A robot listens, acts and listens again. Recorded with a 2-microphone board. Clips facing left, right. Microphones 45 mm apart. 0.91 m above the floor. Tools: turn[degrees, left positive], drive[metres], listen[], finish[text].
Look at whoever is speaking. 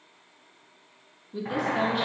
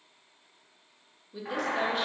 Action: turn[30]
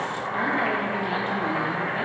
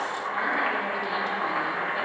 Action: listen[]
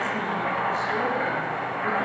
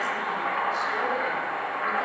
Action: listen[]
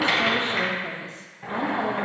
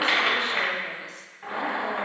Action: finish[I heard a woman speaking, but can't make it out now. It was about 25° right or 145° left.]